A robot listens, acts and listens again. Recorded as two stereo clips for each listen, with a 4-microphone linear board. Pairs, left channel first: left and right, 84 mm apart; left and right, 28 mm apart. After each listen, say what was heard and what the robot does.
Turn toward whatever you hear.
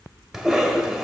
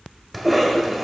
Turn 30° right.
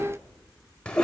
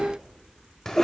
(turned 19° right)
So it is at 10° left. Turn 10° left.
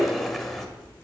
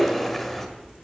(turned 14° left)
Found it: a cough, straight ahead, 1 to 2 m away.